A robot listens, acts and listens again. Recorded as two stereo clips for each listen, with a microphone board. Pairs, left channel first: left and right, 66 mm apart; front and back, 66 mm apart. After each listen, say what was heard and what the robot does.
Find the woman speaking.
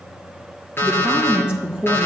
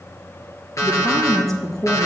The woman speaking: 20° right. Turn 20° right.
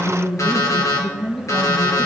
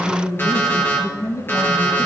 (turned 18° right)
Found it: a woman speaking, straight ahead.